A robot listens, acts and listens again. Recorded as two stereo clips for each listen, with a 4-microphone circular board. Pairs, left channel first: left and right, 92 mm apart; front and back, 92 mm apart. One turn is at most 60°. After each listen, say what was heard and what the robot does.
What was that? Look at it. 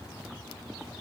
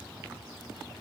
Keep listening.
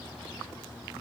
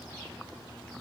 Keep listening.
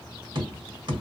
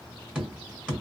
The tapping: 105° right. Turn 60° right.
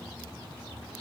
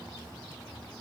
The tapping is now 40° right. Turn 40° right.
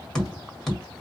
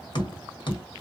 Found it: tapping, straight ahead, 1 to 2 m away.